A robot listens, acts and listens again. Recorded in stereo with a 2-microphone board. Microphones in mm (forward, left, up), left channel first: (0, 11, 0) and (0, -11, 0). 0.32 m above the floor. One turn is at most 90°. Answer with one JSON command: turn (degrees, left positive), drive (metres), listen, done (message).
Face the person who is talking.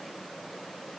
{"listen": true}
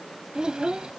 {"turn": -40}
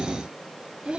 {"turn": -90}
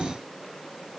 {"listen": true}
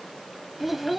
{"turn": -15}
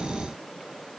{"listen": true}
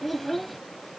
{"done": "Facing the child speaking."}